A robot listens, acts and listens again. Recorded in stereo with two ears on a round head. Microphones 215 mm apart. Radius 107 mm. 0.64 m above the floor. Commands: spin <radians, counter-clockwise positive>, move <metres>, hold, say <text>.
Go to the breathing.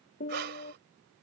spin -0.79
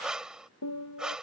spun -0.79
move 1.0
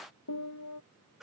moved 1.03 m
hold
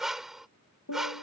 move 1.0
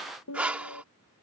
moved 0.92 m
move 1.0
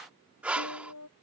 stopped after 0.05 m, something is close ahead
say I am next to the breathing.